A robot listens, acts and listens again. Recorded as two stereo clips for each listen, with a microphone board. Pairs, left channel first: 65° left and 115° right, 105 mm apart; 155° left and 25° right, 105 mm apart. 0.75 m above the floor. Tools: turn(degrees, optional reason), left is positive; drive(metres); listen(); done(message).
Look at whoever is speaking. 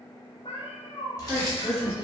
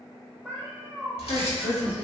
turn(degrees=170, reason="The woman speaking: 170° left.")
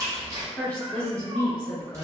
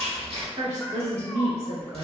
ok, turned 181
turn(degrees=-10, reason="The woman speaking is now 10° right.")
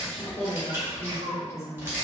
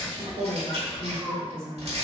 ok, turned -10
done("Found it: a woman speaking, straight ahead.")